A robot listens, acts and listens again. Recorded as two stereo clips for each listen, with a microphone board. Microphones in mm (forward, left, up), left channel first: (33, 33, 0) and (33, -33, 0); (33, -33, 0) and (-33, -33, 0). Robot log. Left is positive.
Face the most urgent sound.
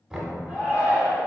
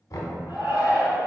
note: The shout: 160° right.
cmd yaw -160
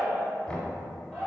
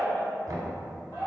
note: The shout is now 10° left.
cmd yaw +10
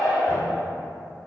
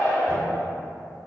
end: Found it: a shout, straight ahead, 1 to 2 m away.